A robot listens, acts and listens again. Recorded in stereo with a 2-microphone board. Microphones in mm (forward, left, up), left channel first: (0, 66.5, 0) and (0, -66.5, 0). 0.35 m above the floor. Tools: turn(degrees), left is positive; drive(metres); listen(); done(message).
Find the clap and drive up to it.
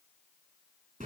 listen()
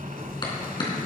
turn(degrees=35)
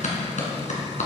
turn(degrees=115)
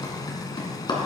turn(degrees=35)
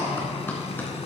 turn(degrees=15)
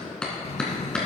drive(metres=1.0)
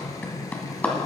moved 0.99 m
turn(degrees=15)
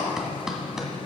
drive(metres=1.0)
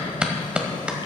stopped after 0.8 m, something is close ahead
turn(degrees=-10)
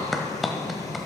done("I am next to the clap.")